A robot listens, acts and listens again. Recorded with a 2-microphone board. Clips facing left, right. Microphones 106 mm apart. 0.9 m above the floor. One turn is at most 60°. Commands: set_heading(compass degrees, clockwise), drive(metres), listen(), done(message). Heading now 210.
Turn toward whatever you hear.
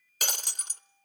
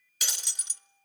set_heading(160)
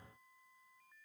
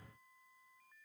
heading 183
listen()
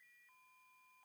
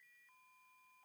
done("I heard breaking glass, but can't make it out now. It was about 25° left or 105° left.")